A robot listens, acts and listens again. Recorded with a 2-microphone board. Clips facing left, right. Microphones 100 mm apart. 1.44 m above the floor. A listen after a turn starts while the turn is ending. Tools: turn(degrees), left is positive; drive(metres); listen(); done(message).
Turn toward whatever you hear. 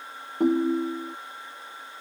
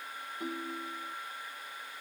turn(degrees=55)
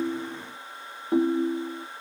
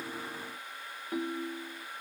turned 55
turn(degrees=45)
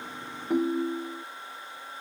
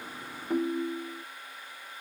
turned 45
done("Found it: a ringtone, straight ahead.")